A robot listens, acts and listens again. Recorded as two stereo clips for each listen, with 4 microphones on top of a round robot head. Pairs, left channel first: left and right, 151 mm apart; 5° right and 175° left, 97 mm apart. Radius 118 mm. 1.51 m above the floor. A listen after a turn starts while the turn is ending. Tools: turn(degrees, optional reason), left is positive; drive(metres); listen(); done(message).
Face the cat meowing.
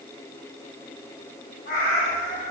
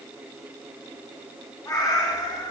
turn(degrees=40, reason="The cat meowing: 40° left.")
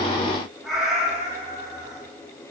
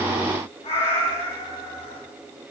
turn(degrees=-20, reason="The cat meowing is now 20° right.")
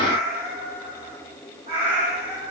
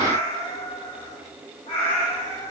turn(degrees=-40, reason="The cat meowing is now 40° right.")
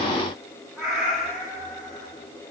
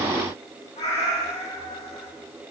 done("Facing the cat meowing, 2 to 4 m away.")